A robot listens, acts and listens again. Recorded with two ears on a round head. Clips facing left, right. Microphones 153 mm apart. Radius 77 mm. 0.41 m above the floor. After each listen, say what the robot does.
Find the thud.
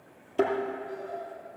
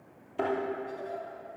Turn 45° left.
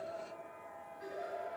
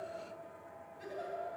Keep listening.
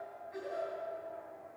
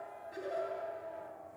I heard a thud, but can't make it out now. It was about straight ahead or 90° left.